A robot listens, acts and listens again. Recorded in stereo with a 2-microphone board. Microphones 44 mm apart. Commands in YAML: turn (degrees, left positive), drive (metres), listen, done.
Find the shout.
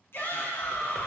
turn: 60
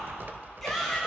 done: "Found it: a shout, straight ahead."